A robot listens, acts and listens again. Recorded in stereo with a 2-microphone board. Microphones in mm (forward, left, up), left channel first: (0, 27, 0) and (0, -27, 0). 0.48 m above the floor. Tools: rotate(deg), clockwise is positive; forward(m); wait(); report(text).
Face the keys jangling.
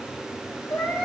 wait()
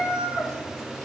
wait()
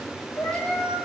report("I can't make out keys jangling, only a cat meowing.")